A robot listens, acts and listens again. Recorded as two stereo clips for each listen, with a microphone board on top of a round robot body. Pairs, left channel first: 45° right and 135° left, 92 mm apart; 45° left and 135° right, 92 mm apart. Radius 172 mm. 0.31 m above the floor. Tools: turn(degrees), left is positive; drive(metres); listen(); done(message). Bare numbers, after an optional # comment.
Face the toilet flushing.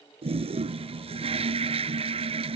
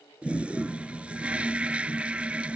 # The toilet flushing: 150° left.
turn(150)
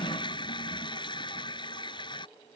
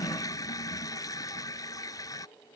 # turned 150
done("Found it: a toilet flushing, straight ahead.")